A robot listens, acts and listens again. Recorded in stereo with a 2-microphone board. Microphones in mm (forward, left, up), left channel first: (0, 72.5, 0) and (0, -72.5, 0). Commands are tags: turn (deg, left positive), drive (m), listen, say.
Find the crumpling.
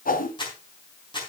<turn deg="30"/>
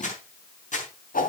<turn deg="115"/>
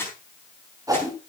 <turn deg="15"/>
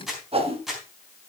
<say>Facing the crumpling.</say>